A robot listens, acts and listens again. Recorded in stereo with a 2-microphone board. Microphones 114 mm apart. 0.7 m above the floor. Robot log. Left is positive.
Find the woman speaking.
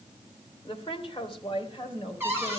note: The woman speaking: about 50° left or 130° left.
cmd yaw +50
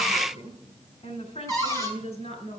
note: So it is at 75° left.
cmd yaw +75
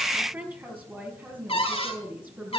note: The woman speaking is now 15° right.
cmd yaw -15
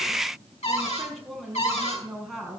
end: Facing the woman speaking, over 4 m away.